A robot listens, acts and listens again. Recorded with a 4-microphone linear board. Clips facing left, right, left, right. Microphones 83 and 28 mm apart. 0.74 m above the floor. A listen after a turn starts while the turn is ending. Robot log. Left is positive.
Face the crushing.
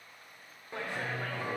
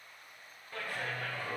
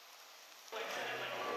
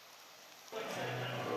cmd idle
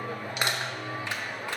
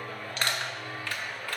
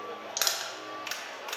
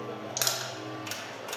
note: The crushing: about 15° left or 165° left.
cmd yaw +15
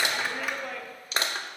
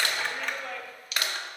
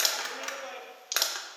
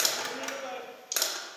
note: So it is at 150° left.
cmd yaw +150
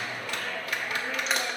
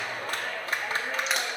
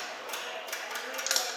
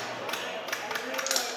end: Found it: crushing, straight ahead.